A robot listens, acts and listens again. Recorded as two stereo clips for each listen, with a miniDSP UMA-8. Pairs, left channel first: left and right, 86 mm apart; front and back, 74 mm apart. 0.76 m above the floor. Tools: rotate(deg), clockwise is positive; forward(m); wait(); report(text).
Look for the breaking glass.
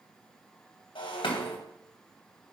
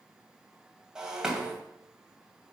rotate(-100)
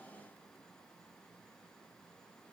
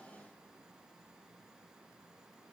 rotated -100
report("Facing where the breaking glass came from. I can't hear it now.")